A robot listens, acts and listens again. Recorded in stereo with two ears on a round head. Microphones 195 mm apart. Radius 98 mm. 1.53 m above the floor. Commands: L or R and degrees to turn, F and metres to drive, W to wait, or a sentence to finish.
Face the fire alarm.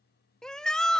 W
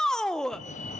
L35
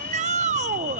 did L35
L105
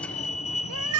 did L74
L35
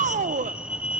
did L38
Found it: a fire alarm, straight ahead.